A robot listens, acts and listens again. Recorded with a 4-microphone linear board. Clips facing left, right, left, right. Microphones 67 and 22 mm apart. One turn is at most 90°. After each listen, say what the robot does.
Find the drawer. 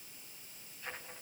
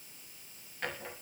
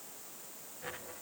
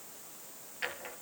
Turn 90° right.
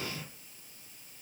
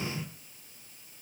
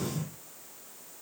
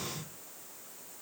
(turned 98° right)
Turn 10° left.
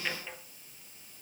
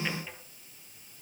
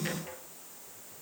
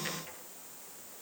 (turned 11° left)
Facing the drawer, 2 to 4 m away.